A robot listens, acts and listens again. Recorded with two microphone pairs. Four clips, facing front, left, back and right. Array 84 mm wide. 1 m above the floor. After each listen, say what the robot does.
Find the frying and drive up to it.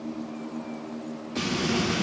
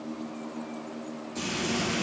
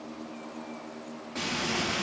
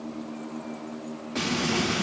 Turn 110° right.
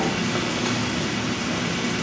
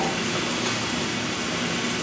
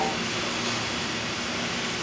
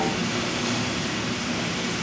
Turn 10° left.
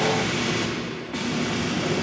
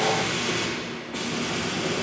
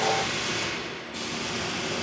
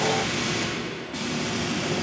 Drive 1.0 m forward.
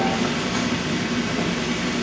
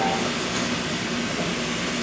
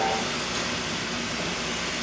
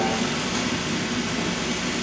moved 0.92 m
Turn 10° right.
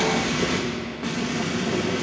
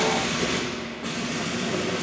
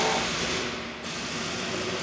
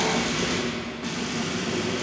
Drive 1.0 m forward.
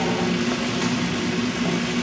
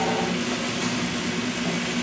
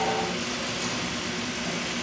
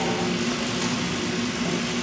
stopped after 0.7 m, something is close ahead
Arrived at the frying, straight ahead.